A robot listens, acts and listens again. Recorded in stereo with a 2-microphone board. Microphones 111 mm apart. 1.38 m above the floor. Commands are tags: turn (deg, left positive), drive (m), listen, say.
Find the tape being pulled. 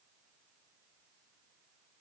<listen/>
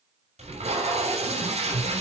<turn deg="-90"/>
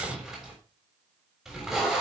<say>Facing the tape being pulled, over 4 m away.</say>